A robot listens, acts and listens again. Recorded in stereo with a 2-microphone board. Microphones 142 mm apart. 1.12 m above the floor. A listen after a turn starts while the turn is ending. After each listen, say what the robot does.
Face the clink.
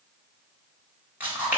Keep listening.
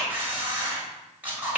Keep listening.
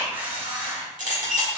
Turn 70° right.
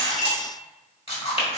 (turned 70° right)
Keep listening.
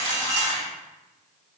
Keep listening.
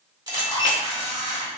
Turn 30° right.
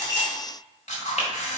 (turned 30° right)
Keep listening.
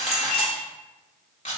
Facing the clink, 1 to 2 m away.